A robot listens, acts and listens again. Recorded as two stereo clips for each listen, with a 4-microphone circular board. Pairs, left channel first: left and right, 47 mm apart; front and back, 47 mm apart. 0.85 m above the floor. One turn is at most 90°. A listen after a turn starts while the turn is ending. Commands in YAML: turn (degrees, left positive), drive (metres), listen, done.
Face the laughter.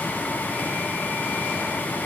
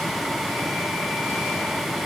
listen: true
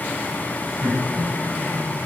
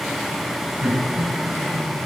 turn: -90
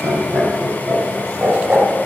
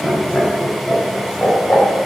turn: -40
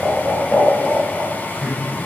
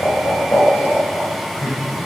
turn: 15
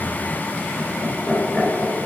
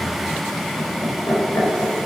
done: "Found it: laughter, straight ahead, 2 to 4 m away."